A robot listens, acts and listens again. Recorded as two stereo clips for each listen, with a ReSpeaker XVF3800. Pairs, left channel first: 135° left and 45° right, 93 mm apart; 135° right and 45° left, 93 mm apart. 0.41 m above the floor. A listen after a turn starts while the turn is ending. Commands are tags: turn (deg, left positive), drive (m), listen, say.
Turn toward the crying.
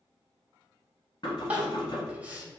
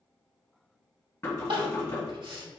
<turn deg="30"/>
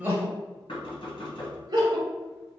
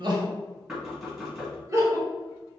<say>Found it: crying, straight ahead, under 1 m away.</say>